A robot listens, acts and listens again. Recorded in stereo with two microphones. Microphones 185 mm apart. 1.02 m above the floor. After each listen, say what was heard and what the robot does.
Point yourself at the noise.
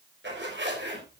Turn 90° right.
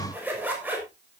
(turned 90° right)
So it is at 10° right. Turn 10° right.
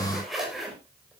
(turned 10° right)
Found it: a zipper, straight ahead.